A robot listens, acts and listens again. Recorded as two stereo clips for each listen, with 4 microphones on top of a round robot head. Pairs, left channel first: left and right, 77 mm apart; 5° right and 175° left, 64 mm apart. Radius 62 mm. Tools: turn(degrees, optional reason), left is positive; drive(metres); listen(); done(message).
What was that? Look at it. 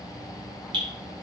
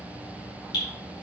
turn(degrees=-45, reason="The dripping: 45° right.")
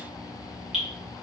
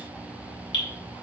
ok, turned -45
done("Found it: dripping, straight ahead, 2 to 4 m away.")